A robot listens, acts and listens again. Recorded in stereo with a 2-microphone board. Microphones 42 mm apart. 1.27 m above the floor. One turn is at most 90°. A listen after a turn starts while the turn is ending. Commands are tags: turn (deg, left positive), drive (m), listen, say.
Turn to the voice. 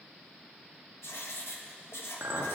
<listen/>
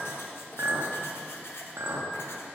<listen/>
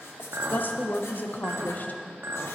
<turn deg="45"/>
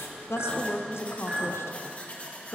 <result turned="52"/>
<turn deg="80"/>
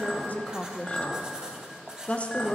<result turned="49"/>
<turn deg="30"/>
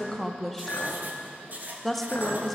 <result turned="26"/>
<say>Facing the woman speaking, under 1 m away.</say>